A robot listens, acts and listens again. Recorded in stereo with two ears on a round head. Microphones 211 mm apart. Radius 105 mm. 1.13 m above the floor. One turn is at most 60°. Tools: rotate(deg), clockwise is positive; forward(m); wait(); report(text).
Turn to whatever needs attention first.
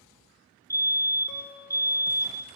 rotate(-30)
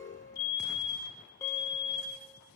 rotate(-60)
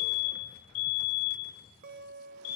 rotate(-60)
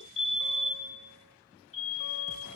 rotate(-30)
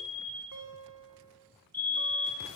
report("Facing the fire alarm.")